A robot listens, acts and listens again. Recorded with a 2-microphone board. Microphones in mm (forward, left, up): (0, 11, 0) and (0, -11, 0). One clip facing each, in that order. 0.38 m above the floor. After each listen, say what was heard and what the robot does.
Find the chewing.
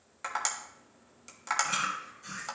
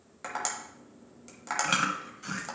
The chewing: about 60° right or 120° right. Turn 60° right.
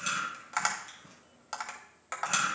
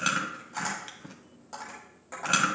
So it is at 55° right. Turn 55° right.
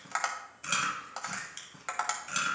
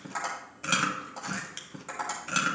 The chewing is now 20° right. Turn 20° right.
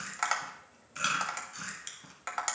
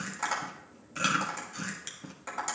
Facing the chewing, 1 to 2 m away.